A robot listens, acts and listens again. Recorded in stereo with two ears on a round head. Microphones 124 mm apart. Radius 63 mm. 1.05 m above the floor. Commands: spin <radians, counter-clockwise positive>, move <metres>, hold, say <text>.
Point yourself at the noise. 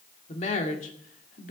spin 1.13
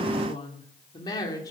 spin 0.44
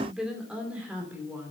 spin -0.26
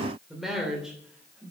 spin -0.17
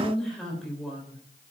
say Facing the woman speaking.